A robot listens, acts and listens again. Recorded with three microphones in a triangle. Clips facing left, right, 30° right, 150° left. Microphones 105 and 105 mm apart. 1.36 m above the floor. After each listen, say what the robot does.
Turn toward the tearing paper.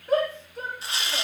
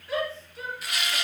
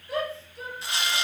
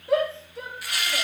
Turn 30° left.
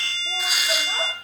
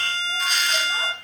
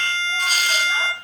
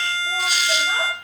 Keep listening.
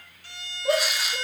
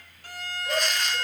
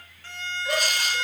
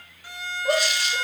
Keep listening.
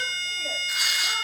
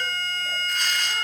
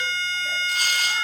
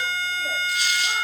I heard tearing paper from this way, but can't make it out now.